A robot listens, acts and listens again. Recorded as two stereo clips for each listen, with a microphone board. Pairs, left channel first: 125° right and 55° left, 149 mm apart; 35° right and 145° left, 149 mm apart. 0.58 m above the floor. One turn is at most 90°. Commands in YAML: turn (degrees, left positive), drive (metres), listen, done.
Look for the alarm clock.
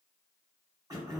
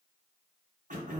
listen: true
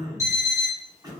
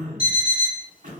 turn: -10
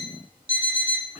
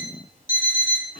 done: "Found it: an alarm clock, straight ahead."